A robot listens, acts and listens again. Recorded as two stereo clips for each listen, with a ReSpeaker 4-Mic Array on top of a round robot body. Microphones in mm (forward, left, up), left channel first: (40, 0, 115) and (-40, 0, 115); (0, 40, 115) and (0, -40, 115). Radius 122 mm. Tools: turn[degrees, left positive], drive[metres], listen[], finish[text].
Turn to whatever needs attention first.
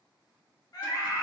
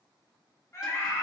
Thought: The scream: 35° left.
Action: turn[35]
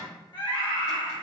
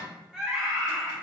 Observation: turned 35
Thought: The scream is now 10° right.
Action: turn[-10]
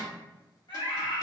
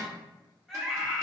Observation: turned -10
Action: finish[Found it: a scream, straight ahead.]